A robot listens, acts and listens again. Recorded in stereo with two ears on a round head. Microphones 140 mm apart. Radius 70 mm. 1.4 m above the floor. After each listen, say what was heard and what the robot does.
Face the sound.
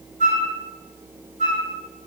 The flute: about 55° right or 125° right. Turn 55° right.
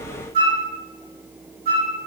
So it is at 70° right. Turn 70° right.
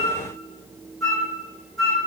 Found it: a flute, straight ahead, 2 to 4 m away.